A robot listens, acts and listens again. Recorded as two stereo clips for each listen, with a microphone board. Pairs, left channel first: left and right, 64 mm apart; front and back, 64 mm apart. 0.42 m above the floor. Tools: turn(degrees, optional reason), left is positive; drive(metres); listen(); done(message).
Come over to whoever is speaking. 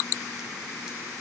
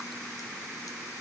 listen()
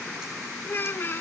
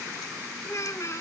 turn(degrees=35, reason="The child speaking: 35° left.")
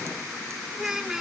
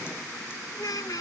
turn(degrees=-10, reason="The child speaking is now 10° right.")
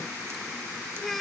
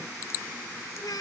drive(metres=1.0)
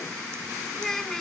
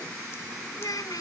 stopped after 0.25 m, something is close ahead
done("Something is in my way. I am facing the child speaking but have not reached it.")